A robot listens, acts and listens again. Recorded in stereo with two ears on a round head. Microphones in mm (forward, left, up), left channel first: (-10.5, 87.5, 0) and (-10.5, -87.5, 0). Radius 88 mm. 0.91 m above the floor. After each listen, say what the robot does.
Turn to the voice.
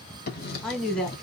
Turn 30° left.
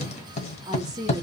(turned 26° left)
Turn 20° right.
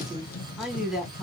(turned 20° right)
Facing the woman speaking, 1 to 2 m away.